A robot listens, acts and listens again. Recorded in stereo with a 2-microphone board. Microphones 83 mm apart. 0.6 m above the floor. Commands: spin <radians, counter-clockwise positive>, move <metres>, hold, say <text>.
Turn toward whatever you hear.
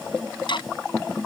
spin 1.22
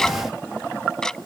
say Facing the ticking.